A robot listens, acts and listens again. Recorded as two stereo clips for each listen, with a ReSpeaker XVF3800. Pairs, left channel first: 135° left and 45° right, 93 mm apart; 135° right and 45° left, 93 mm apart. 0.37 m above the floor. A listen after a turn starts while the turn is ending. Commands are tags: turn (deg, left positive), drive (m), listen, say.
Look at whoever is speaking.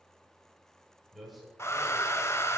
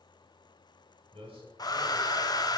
<turn deg="40"/>
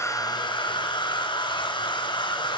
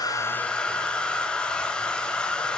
<listen/>
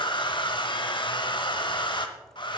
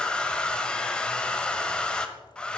<listen/>
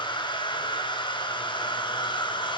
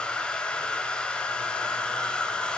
<say>I heard a man speaking from this way, but can't make it out now.</say>